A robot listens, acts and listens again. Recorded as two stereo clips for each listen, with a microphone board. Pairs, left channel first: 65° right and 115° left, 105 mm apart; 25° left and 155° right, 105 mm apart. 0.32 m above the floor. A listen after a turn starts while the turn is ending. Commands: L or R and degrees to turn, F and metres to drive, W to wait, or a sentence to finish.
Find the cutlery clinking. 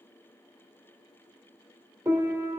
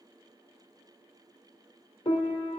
W
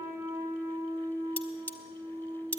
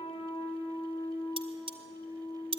R140
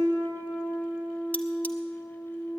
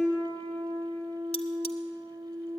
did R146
W
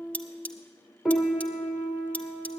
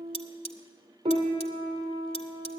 Facing the cutlery clinking.